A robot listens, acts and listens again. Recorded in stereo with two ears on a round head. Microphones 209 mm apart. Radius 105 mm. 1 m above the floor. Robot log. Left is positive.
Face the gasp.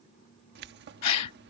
cmd yaw +90
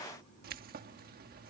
end: Facing where the gasp came from. I can't hear it now.